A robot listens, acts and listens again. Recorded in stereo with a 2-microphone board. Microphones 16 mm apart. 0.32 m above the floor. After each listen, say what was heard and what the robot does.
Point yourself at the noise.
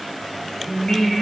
The singing: about 65° left or 115° left. Turn 65° left.
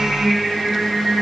So it is at 55° left. Turn 55° left.
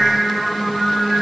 Facing the singing, 2 to 4 m away.